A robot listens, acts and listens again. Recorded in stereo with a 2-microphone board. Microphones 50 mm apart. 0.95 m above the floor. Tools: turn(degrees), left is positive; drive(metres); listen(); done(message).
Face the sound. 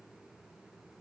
listen()
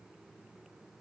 listen()
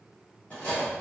turn(degrees=30)
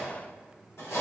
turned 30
turn(degrees=120)
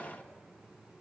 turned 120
listen()
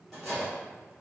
done("Found it: cutlery clinking, straight ahead.")